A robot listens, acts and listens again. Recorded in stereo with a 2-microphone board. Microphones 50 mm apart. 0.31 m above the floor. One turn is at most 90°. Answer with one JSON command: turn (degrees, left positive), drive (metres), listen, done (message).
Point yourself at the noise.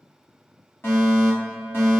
{"turn": 50}
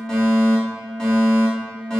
{"turn": 15}
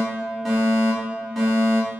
{"done": "Facing the fire alarm, over 4 m away."}